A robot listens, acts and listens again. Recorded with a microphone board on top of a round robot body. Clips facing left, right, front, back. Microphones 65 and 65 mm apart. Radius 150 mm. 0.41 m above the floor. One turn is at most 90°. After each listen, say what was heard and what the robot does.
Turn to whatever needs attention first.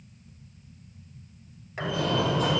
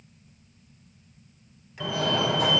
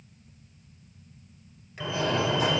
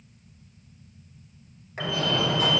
The fire alarm: 70° right. Turn 70° right.
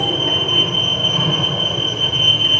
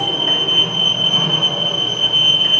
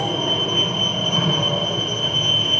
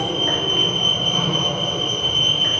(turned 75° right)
Facing the fire alarm, over 4 m away.